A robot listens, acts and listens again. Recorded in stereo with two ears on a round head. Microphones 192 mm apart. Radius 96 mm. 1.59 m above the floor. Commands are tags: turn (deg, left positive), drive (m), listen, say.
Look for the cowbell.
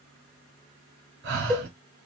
<turn deg="-30"/>
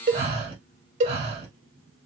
<turn deg="-145"/>
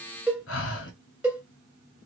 <say>Found it: a cowbell, straight ahead.</say>